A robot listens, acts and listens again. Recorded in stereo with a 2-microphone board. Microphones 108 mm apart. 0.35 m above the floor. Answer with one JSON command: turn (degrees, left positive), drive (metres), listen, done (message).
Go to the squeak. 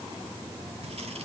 {"listen": true}
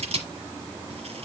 {"listen": true}
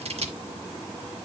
{"done": "I can't make out a squeak to turn to."}